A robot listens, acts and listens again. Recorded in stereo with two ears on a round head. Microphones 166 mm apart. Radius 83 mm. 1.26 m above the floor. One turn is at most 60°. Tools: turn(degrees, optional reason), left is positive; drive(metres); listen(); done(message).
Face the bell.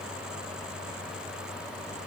listen()
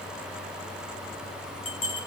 turn(degrees=45, reason="The bell: about 45° left or 135° left.")
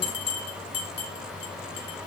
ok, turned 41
turn(degrees=60, reason="So it is at 85° left.")
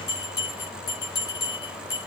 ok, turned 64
turn(degrees=20, reason="The bell is now 20° left.")
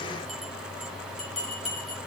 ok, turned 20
done("Facing the bell, 2 to 4 m away.")